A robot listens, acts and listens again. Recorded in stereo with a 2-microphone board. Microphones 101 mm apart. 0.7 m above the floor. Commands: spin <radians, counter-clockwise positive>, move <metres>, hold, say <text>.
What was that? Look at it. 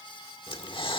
spin 0.96
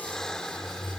say Facing the breathing.